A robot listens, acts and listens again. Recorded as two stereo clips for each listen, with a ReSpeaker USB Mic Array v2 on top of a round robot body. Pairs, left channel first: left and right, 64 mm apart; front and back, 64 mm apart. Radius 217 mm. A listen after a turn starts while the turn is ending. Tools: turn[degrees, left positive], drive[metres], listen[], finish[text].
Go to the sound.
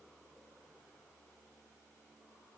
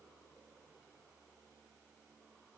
Action: listen[]
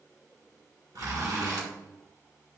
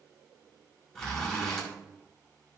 Thought: The zipper: 80° right.
Action: turn[-80]
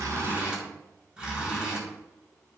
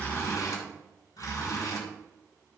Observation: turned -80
Thought: The zipper is now 20° right.
Action: turn[-20]
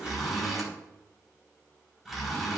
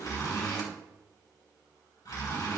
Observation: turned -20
Action: drive[1.0]
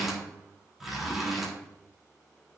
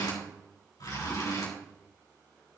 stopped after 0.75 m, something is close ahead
Action: finish[Blocked. The zipper is further on, straight ahead.]